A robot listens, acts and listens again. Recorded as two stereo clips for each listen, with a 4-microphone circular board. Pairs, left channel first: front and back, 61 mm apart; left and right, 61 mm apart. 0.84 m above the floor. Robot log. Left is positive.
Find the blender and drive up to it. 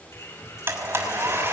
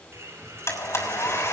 note: The blender: 130° left.
cmd yaw +130
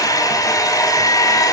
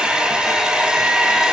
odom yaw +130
note: The blender is now 10° right.
cmd yaw -10
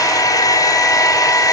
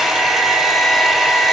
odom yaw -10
cmd fwd 1.0
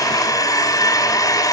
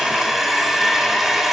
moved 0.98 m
cmd fwd 1.0
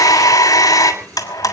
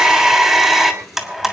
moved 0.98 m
cmd fwd 1.0
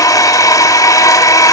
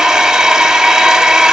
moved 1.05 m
note: The blender is now 10° right.
cmd yaw -10
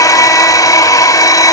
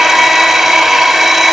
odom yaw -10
cmd fwd 1.0
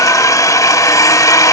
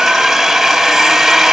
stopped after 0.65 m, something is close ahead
end: Arrived at the blender, straight ahead.